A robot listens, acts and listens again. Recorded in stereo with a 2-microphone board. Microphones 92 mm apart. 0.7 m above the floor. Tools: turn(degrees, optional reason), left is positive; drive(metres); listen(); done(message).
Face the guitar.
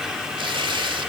listen()
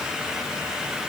listen()
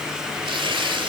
done("I can't make out a guitar, only tearing paper.")